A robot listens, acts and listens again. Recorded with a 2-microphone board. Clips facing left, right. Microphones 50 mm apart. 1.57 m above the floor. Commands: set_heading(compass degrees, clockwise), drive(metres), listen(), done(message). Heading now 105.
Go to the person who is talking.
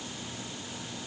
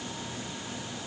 listen()
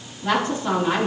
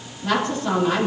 set_heading(75)
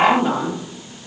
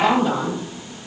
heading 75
set_heading(290)
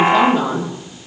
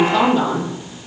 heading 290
set_heading(260)
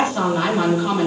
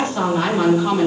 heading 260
set_heading(245)
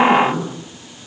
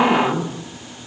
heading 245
drive(1.0)
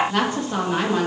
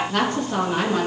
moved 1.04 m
set_heading(235)
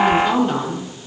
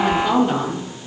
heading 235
drive(1.0)
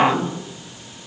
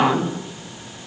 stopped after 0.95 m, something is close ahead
set_heading(245)
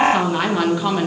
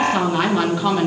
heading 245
done("I am next to the woman speaking.")